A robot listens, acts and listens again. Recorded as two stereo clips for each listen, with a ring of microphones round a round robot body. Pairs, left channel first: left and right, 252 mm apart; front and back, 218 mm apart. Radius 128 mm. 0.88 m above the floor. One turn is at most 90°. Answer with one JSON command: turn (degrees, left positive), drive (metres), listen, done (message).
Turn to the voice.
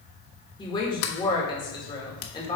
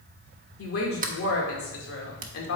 {"turn": 15}
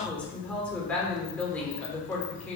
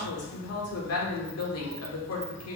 {"done": "Found it: a woman speaking, straight ahead, 2 to 4 m away."}